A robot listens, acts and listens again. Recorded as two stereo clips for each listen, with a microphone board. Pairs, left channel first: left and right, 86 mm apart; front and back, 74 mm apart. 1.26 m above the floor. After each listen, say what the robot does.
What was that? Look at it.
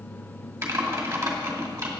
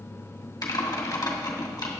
Turn 30° right.
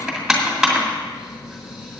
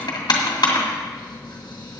Facing the typing on a keyboard.